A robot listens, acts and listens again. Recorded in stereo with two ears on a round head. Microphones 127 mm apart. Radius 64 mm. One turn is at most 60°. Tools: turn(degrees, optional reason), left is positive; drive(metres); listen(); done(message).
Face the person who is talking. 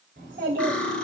turn(degrees=-60, reason="The child speaking: about 65° right or 115° right.")
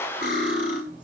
done("Found it: a child speaking, straight ahead.")